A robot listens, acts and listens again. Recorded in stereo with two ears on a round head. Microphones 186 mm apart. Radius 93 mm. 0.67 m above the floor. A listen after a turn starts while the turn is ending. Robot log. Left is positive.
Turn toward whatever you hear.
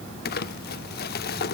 note: The crumpling: about 45° left or 135° left.
cmd yaw +45
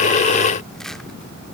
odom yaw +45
cmd idle
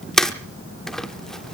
end: Found it: crumpling, straight ahead, under 1 m away.